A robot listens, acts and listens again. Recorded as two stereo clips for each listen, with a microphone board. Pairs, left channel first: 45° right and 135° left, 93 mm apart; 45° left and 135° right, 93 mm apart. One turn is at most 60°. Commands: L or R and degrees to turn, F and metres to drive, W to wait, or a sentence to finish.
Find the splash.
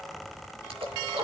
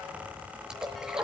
L60
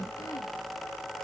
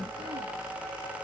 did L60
L60
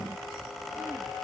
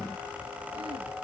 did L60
L25
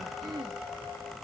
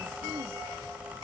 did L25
I heard a splash from this way, but can't make it out now.